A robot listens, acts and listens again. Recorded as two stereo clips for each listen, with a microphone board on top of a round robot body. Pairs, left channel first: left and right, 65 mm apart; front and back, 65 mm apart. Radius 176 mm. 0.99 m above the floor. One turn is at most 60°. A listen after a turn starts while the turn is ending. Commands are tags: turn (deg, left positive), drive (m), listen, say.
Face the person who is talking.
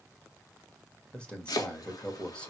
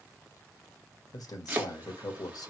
<turn deg="15"/>
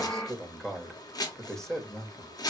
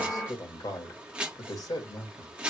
<say>Found it: a man speaking, straight ahead, 2 to 4 m away.</say>